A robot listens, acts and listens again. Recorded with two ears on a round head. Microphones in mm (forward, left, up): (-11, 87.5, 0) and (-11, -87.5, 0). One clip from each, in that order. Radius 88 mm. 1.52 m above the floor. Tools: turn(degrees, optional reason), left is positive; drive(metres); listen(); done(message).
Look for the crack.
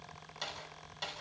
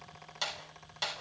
listen()
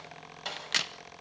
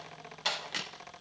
turn(degrees=40, reason="The crack: about 40° left or 140° left.")
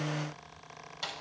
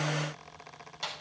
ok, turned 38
listen()
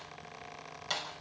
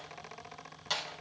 done("I heard a crack, but can't make it out now. It was about 5° left or 100° left.")